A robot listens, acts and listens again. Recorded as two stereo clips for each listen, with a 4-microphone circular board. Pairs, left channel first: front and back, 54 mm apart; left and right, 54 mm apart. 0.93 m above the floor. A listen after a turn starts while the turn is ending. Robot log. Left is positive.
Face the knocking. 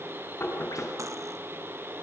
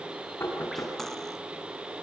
note: The knocking: 50° left.
cmd yaw +50
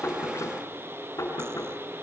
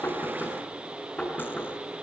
note: The knocking is now 20° left.
cmd yaw +20
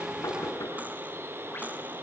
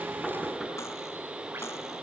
end: Found it: knocking, straight ahead.